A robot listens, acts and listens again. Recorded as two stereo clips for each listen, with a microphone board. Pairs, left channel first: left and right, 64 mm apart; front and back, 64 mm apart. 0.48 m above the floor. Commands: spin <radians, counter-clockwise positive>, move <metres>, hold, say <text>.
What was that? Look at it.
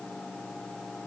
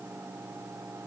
hold
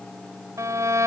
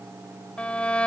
spin -1.22
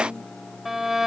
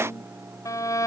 say Found it: a violin, straight ahead.